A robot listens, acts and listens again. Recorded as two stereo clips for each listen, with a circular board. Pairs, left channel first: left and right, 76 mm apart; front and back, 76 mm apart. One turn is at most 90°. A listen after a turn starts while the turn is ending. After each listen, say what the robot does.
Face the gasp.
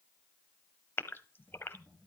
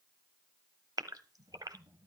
Turn 90° left.
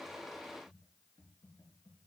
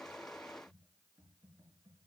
Turn 60° left.
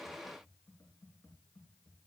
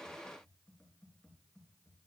Facing where the gasp came from. I can't hear it now.